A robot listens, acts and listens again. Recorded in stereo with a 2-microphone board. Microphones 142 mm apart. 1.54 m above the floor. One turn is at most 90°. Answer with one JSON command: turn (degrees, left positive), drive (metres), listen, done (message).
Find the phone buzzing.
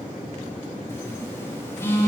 {"turn": 15}
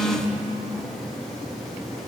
{"done": "Facing the phone buzzing, under 1 m away."}